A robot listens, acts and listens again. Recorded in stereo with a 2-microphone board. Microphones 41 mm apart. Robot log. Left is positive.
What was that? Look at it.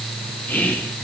note: The whispering: about 45° left or 135° left.
cmd yaw +45
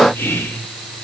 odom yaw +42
note: So it is at 90° left.
cmd yaw +90
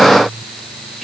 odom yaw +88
cmd idle
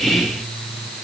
end: Found it: whispering, straight ahead.